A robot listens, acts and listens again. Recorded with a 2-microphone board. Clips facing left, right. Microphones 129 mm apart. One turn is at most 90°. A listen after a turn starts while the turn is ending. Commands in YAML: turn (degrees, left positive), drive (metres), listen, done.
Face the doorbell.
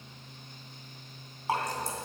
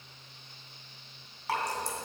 listen: true
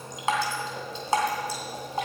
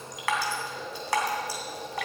listen: true
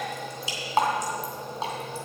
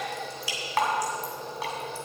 done: "I can't make out a doorbell to turn to."